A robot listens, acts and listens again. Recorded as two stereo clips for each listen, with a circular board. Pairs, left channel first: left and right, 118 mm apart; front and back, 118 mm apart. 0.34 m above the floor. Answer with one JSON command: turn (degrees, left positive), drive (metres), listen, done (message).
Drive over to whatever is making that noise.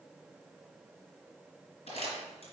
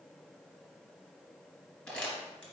{"turn": 85}
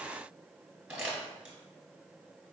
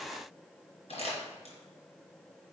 {"drive": 1.0}
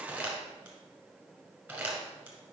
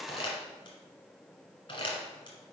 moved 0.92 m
{"turn": -15}
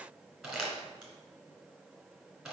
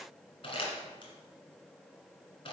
{"drive": 1.0}
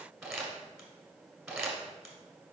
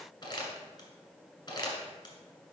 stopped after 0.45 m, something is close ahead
{"turn": -10}
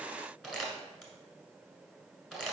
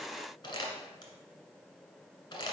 {"done": "Arrived at the crumpling, straight ahead."}